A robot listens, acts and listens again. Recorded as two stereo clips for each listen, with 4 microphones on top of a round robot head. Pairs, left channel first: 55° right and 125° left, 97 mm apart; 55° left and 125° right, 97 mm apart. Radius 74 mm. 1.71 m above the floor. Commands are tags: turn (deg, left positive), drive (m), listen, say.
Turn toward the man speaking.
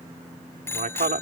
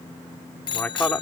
<turn deg="135"/>
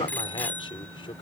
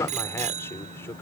<turn deg="-10"/>
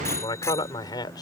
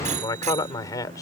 <say>Found it: a man speaking, straight ahead.</say>